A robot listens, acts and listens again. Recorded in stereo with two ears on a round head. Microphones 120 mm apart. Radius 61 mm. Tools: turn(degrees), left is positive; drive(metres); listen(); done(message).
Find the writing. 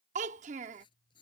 turn(degrees=35)
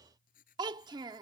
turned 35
turn(degrees=105)
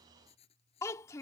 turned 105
turn(degrees=45)
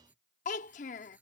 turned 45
turn(degrees=-10)
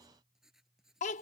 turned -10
done("Facing the writing.")